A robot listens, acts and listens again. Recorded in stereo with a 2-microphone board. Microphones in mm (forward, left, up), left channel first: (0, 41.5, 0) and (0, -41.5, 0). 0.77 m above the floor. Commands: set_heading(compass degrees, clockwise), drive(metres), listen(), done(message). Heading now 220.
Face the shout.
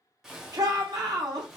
set_heading(270)
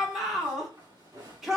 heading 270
done("Found it: a shout, straight ahead, 1 to 2 m away.")